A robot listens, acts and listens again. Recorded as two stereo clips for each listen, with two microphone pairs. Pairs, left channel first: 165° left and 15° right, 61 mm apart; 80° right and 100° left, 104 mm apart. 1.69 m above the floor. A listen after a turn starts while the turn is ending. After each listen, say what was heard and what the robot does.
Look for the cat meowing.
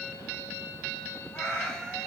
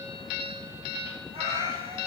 The cat meowing: 90° left. Turn 90° left.
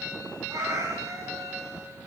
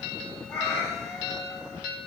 The cat meowing is now 10° right. Turn 10° right.
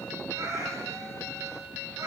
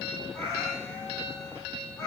The cat meowing is now 10° right. Turn 10° right.
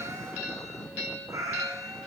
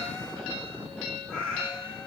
Found it: a cat meowing, straight ahead.